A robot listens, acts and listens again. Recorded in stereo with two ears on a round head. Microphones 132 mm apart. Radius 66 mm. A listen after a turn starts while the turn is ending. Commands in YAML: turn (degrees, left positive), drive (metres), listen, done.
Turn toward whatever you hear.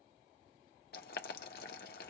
turn: 65
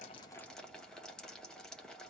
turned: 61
done: "Facing the boiling."